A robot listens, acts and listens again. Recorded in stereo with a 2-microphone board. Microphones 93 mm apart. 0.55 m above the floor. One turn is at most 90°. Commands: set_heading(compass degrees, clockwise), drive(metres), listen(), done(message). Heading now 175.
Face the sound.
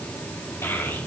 set_heading(150)
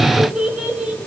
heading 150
set_heading(165)
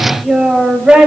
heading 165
set_heading(180)
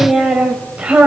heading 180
set_heading(195)
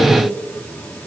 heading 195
listen()
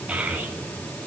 set_heading(210)
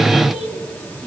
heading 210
listen()
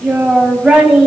set_heading(220)
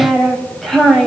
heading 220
done("Found it: a child speaking, straight ahead, 2 to 4 m away.")